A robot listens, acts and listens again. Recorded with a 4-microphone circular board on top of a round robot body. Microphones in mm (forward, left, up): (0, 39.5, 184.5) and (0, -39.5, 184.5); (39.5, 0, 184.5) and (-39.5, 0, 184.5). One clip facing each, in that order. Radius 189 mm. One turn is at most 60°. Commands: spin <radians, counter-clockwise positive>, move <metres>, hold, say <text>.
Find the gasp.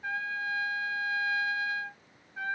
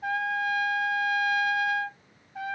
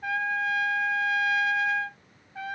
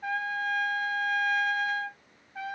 hold
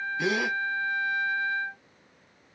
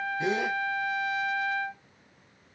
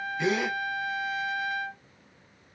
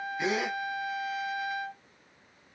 spin 1.05
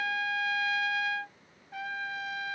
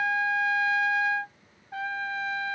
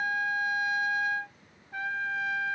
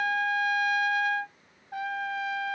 spin 0.70
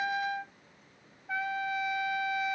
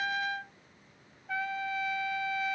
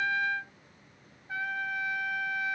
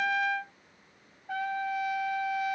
say Facing where the gasp came from. I can't hear it now.